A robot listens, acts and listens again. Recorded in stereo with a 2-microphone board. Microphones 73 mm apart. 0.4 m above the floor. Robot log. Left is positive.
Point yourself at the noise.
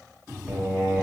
note: The singing: about 20° right or 160° right.
cmd yaw -20
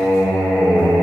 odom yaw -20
end: Facing the singing.